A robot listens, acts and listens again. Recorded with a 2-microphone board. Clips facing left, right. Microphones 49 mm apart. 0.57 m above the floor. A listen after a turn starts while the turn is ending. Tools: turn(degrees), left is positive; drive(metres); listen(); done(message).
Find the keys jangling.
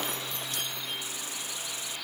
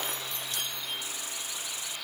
listen()
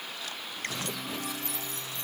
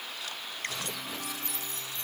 listen()
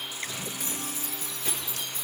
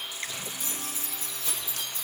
turn(degrees=50)
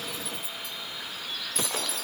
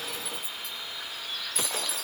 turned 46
listen()
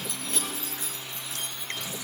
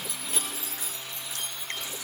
done("Found it: keys jangling, straight ahead.")